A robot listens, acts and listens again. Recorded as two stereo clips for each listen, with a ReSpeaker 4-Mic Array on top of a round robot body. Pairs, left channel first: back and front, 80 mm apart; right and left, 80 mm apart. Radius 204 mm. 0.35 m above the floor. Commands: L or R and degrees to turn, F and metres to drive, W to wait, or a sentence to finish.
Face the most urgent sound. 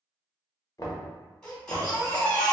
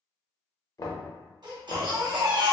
L105
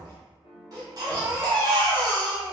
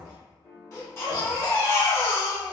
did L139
R35
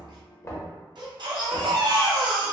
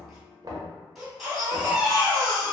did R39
Found it: a baby crying, straight ahead, 1 to 2 m away.